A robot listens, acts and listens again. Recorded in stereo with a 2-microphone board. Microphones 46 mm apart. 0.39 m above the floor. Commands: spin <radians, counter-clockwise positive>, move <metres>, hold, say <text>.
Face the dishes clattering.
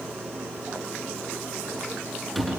hold
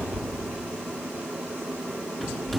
hold
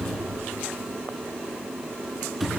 say I can't make out dishes clattering, only a cupboard door.